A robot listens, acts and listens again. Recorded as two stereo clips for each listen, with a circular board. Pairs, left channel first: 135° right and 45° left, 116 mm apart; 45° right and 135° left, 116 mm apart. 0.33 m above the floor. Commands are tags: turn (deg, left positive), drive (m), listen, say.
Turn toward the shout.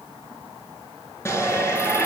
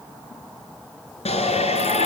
<turn deg="-70"/>
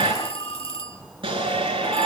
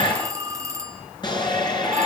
<say>Facing the shout.</say>